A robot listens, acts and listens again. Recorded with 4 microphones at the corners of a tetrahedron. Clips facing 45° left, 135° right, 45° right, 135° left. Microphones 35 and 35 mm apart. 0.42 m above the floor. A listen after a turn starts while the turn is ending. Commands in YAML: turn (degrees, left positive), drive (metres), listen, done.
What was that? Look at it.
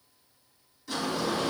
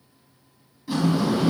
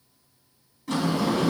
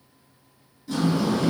turn: -65
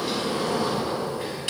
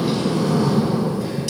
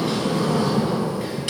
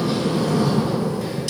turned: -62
done: "Found it: a sliding door, straight ahead, 1 to 2 m away."